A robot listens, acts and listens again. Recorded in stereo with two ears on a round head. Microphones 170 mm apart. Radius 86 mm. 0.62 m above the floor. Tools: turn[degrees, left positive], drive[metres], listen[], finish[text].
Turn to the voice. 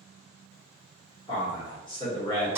Thought: The man speaking: about 25° left or 155° left.
Action: turn[25]
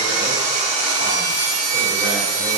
Action: listen[]
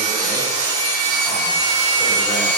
Action: listen[]
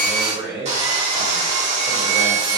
Action: finish[Found it: a man speaking, straight ahead, 1 to 2 m away.]